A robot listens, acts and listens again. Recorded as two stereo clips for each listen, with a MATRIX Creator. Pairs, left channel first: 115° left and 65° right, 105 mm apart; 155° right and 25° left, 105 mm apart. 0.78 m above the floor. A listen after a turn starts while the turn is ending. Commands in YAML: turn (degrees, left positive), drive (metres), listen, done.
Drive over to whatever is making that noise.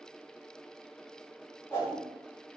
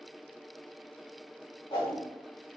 turn: 175
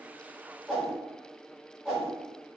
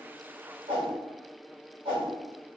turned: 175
turn: 20
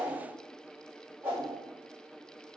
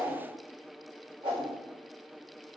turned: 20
drive: 1.0
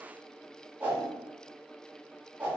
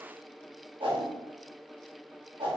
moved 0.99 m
drive: 1.0
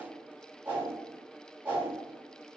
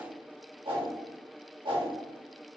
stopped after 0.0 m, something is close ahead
done: "Arrived at the whoosh, straight ahead."